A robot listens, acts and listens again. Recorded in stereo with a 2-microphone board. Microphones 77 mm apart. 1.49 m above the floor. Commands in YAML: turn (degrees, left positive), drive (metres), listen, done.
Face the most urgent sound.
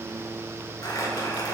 listen: true
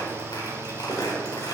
listen: true
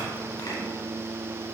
done: "I can't make out anything urgent, only crumpling."